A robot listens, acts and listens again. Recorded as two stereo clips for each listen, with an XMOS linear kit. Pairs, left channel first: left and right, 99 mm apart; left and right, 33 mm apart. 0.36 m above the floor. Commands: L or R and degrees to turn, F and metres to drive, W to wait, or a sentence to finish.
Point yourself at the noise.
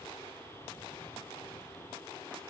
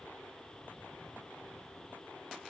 W
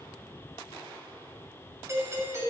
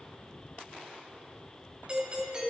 R30
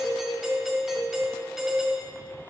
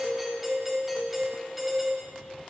Facing the doorbell, 2 to 4 m away.